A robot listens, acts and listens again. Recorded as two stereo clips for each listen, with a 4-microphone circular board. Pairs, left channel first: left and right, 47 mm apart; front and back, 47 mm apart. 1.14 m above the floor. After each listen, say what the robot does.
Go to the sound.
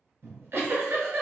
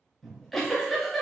Turn 85° right.
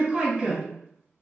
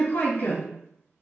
Turn 25° right.
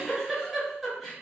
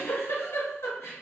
Drive 1.0 m forward.
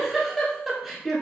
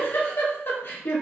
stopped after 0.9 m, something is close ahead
I am next to the giggle.